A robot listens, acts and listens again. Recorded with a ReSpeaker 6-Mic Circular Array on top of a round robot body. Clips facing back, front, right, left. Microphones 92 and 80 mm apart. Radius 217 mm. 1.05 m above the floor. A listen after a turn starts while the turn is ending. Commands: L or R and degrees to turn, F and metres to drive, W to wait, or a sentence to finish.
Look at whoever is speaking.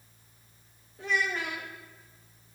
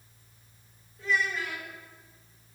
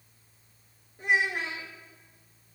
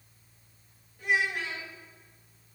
R150
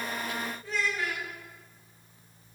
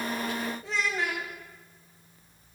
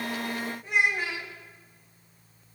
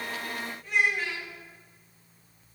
R20
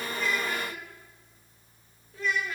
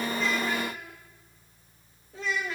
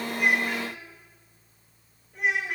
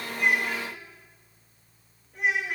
Facing the child speaking.